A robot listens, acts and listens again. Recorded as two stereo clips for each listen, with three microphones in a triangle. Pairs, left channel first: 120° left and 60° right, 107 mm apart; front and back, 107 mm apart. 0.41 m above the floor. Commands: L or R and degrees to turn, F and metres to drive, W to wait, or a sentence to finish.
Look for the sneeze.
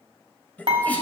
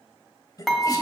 L45
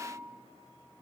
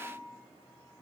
Facing where the sneeze came from. I can't hear it now.